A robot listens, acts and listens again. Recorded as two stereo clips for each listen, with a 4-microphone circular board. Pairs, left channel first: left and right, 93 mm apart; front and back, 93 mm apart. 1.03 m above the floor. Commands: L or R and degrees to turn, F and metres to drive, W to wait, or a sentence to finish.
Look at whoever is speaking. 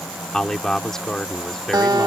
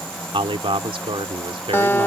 L175
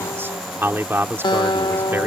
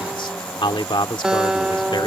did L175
R25
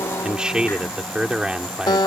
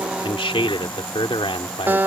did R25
R10
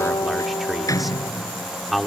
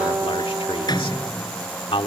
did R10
Facing the man speaking.